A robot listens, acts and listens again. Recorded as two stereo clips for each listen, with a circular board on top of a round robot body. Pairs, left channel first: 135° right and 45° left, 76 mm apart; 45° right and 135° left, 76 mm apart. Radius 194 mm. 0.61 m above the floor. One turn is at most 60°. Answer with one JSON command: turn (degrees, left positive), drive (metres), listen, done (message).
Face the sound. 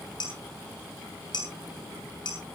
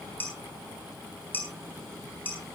{"turn": -60}
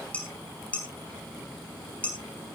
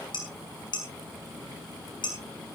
{"turn": -60}
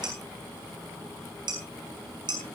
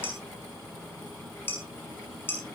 {"turn": 15}
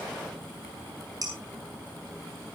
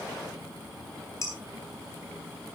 {"done": "Facing the dishes clattering."}